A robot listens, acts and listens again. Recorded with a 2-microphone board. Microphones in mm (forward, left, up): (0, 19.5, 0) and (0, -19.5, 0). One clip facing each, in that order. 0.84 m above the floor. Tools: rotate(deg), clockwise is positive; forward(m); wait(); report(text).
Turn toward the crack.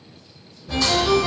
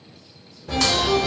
rotate(75)
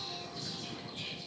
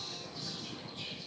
wait()
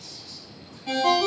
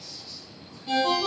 report("I heard a crack, but can't make it out now. It was about straight ahead or 30° right.")